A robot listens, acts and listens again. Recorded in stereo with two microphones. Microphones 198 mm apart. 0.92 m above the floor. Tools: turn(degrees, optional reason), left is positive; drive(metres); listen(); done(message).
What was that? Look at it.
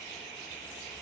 listen()
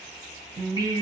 turn(degrees=-20, reason="The singing: about 20° right or 160° right.")
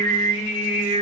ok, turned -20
turn(degrees=-35, reason="The singing: about 35° right or 145° right.")
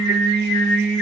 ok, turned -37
turn(degrees=-110, reason="So it is at 110° right.")
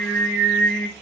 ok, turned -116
turn(degrees=10, reason="The singing is now 10° left.")
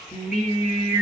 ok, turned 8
done("Facing the singing.")